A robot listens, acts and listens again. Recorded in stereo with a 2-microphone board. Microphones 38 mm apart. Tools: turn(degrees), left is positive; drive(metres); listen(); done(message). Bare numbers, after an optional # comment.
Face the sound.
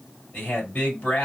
# The man speaking: about 40° left or 140° left.
turn(40)
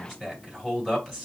done("Facing the man speaking.")